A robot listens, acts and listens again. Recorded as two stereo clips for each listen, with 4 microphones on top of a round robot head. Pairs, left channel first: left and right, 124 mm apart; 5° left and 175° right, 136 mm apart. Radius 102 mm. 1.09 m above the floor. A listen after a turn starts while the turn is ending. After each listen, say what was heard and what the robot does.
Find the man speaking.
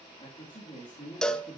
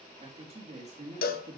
The man speaking: 155° left. Turn 155° left.
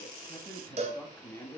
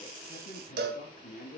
The man speaking is now 20° left. Turn 20° left.
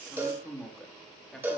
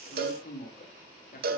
Facing the man speaking, 2 to 4 m away.